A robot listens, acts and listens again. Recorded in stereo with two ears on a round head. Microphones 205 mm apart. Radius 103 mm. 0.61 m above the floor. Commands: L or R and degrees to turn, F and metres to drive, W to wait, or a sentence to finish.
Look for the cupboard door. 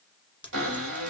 R65
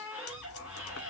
Facing the cupboard door.